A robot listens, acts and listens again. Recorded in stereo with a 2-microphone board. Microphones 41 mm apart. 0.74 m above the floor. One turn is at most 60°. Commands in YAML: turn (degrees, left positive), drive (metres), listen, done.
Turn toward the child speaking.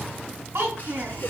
turn: -60
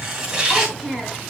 done: "Found it: a child speaking, straight ahead, 2 to 4 m away."